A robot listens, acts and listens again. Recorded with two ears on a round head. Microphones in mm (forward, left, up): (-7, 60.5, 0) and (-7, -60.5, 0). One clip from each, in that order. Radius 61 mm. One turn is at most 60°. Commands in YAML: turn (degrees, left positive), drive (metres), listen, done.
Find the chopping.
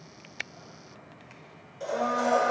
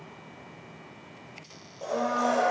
listen: true
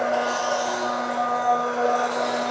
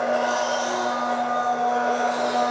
listen: true
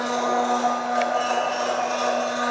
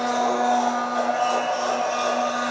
done: "I can't make out chopping to turn to."